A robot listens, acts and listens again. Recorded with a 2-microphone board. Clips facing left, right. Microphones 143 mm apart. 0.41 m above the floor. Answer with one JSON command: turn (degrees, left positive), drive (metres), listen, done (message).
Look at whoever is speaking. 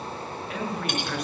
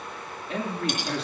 {"turn": -30}
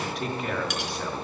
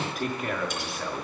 {"done": "Facing the man speaking."}